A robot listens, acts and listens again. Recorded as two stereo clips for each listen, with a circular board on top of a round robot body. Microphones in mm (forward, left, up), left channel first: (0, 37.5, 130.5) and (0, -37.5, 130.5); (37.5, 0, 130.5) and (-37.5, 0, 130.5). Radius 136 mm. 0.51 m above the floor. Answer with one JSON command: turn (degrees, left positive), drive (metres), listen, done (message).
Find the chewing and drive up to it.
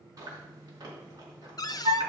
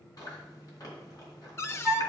{"turn": -45}
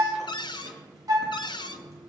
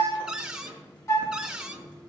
{"listen": true}
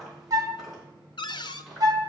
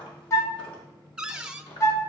{"drive": 1.0}
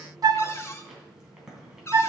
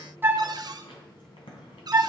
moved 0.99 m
{"drive": 1.0}
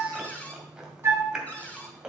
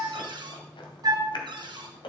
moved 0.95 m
{"turn": -10}
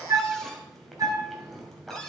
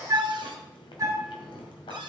{"drive": 1.0}
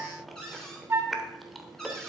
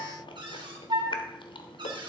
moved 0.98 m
{"drive": 1.0}
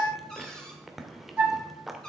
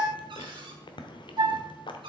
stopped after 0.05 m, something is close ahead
{"done": "Arrived at the chewing, straight ahead."}